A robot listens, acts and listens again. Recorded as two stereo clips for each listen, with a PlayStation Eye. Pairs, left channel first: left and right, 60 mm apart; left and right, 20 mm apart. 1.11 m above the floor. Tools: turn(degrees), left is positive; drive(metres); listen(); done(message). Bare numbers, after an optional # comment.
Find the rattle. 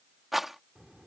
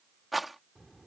turn(-30)
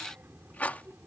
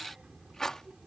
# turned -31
# So it is at 30° left.
turn(30)
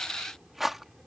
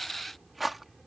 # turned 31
done("Found it: a rattle, straight ahead.")